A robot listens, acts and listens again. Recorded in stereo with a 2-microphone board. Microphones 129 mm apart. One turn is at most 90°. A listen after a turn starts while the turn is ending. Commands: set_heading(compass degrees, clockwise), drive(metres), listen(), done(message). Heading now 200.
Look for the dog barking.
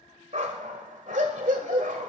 set_heading(290)
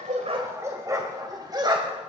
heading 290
set_heading(330)
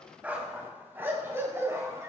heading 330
set_heading(355)
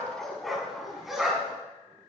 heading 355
done("Facing the dog barking, 2 to 4 m away.")